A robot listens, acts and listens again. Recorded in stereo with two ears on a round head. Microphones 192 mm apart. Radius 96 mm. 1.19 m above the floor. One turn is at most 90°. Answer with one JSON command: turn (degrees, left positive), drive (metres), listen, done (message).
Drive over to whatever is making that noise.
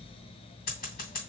{"turn": 40}
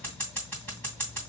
{"drive": 1.0}
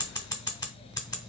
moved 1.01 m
{"turn": 20}
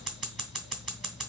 {"drive": 1.0}
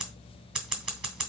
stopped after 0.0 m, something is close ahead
{"done": "Arrived at the scissors, straight ahead."}